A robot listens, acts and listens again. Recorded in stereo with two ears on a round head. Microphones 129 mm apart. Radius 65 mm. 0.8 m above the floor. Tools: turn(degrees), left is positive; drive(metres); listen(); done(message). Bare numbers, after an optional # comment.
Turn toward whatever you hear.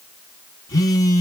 # The phone buzzing: about 25° left or 155° left.
turn(25)
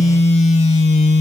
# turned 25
# So it is at 125° left.
turn(125)
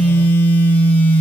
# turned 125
# The phone buzzing is now 15° left.
turn(15)
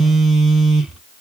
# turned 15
done("Facing the phone buzzing.")